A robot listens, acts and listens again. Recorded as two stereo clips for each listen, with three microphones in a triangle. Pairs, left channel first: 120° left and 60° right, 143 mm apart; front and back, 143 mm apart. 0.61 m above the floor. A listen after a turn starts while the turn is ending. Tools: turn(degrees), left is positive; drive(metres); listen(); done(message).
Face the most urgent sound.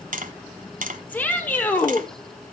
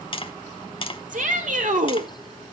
turn(degrees=-165)
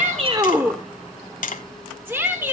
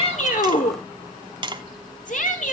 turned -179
turn(degrees=15)
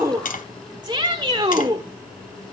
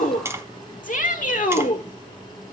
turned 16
done("Found it: a shout, straight ahead, 1 to 2 m away.")